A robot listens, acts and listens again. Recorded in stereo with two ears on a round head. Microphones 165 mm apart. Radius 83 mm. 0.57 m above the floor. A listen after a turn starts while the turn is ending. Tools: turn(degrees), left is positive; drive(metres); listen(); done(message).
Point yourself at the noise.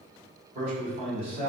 turn(degrees=-35)
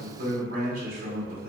turn(degrees=-105)
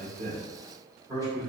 turn(degrees=-20)
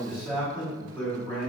done("Facing the man speaking.")